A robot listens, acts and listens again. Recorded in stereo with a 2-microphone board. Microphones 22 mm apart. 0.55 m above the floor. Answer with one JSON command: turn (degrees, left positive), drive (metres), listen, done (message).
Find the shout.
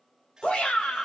{"turn": 60}
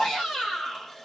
{"turn": 55}
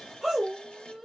{"turn": 15}
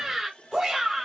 {"done": "Facing the shout, 2 to 4 m away."}